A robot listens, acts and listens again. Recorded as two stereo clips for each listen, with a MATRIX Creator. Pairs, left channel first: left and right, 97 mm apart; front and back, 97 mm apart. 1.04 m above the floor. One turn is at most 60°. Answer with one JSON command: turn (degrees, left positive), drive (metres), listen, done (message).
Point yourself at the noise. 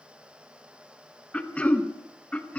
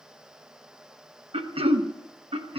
{"turn": 60}
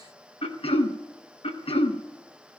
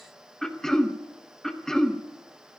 {"turn": 60}
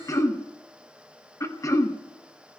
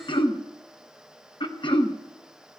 {"turn": 30}
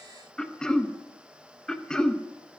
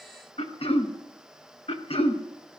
{"done": "Found it: throat clearing, straight ahead."}